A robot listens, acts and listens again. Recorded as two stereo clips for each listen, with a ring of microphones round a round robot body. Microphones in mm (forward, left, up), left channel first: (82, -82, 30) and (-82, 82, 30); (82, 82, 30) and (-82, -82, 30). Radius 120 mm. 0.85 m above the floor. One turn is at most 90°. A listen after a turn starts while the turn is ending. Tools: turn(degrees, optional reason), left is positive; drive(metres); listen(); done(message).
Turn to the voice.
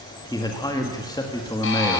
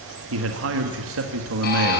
turn(degrees=-90, reason="The man speaking: 115° right.")
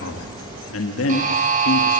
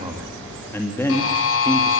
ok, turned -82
turn(degrees=-35, reason="The man speaking is now 35° right.")
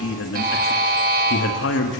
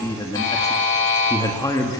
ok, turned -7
turn(degrees=-30, reason="The man speaking is now 30° right.")
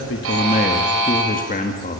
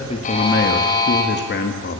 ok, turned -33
done("Facing the man speaking.")